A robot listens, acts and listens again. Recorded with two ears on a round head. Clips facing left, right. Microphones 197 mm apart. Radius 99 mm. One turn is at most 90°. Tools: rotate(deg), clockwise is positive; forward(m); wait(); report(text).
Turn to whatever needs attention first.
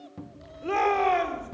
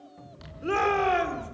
rotate(30)
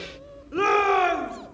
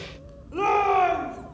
rotate(-20)
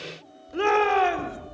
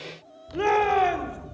report("Facing the shout.")